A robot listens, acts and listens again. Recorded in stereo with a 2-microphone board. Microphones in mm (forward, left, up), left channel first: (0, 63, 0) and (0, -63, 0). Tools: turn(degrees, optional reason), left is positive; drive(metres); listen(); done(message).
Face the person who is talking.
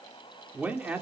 turn(degrees=-30)
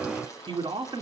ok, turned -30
turn(degrees=-140, reason="So it is at 140° right.")
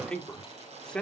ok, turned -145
turn(degrees=10, reason="The man speaking is now 10° left.")
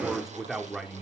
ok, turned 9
done("Facing the man speaking.")